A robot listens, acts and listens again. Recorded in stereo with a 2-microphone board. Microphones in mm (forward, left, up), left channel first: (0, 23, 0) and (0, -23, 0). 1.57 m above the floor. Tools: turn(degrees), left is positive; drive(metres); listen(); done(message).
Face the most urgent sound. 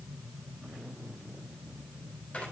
listen()
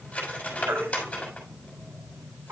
turn(degrees=-70)
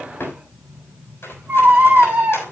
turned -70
turn(degrees=-35)
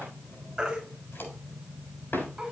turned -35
turn(degrees=-15)
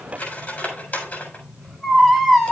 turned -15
done("Found it: a baby crying, straight ahead.")